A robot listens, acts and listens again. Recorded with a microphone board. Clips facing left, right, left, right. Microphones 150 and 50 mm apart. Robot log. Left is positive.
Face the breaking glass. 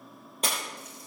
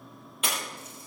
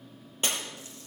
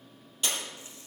note: The breaking glass: about 40° left or 140° left.
cmd yaw +40
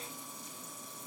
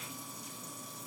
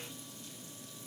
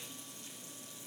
cmd idle
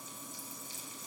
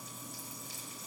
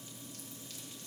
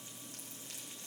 end: I heard breaking glass, but can't make it out now. It was about straight ahead or 100° left.